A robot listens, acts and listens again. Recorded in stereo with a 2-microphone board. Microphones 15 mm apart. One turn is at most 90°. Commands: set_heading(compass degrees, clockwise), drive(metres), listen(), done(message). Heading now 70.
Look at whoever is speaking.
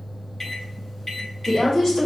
set_heading(45)
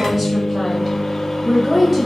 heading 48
done("Facing the woman speaking, 2 to 4 m away.")